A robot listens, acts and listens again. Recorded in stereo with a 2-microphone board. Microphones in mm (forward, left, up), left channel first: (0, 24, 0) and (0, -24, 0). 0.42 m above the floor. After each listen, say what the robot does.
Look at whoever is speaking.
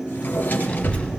Turn 25° left.
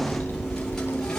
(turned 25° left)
Turn 130° left.
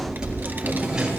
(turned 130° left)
Turn 45° right.
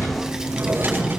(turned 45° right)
Turn 15° right.
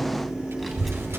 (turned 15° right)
Found it: a child speaking, straight ahead.